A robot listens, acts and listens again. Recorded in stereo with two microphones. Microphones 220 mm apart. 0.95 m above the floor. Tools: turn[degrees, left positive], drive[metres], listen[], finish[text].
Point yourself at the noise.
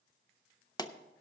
Thought: The pop: about 20° left or 160° left.
Action: turn[20]
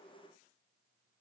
Action: listen[]
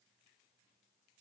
Action: finish[I heard a pop, but can't make it out now. It was about straight ahead or 140° left.]